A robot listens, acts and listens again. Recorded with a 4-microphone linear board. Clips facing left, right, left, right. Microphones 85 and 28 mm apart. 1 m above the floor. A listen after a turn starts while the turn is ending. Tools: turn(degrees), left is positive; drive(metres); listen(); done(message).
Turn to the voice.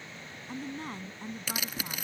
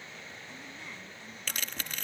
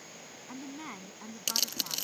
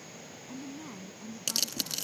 turn(degrees=45)
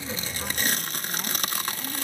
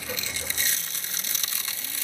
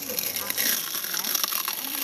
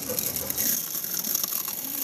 listen()
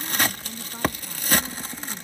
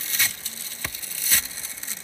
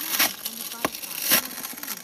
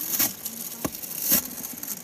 listen()
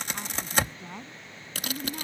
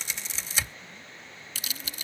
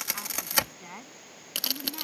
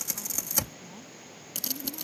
turn(degrees=85)
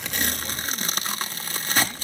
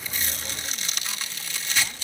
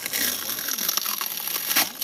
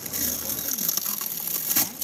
listen()
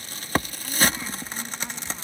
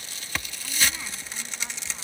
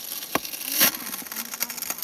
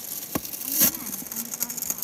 listen()
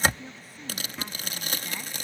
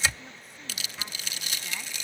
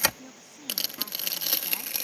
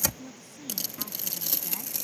done("Facing the woman speaking.")